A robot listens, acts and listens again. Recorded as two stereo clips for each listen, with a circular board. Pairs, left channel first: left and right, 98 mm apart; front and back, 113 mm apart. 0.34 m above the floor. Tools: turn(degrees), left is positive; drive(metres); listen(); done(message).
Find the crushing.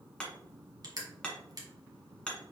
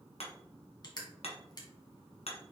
turn(degrees=-50)
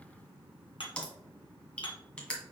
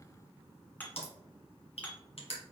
turn(degrees=10)
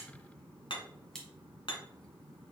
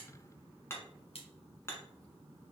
done("Found it: crushing, straight ahead.")